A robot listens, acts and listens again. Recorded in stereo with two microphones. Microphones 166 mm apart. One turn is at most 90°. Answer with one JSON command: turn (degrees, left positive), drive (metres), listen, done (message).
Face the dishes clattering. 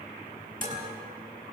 {"turn": -55}
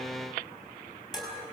{"done": "Found it: dishes clattering, straight ahead."}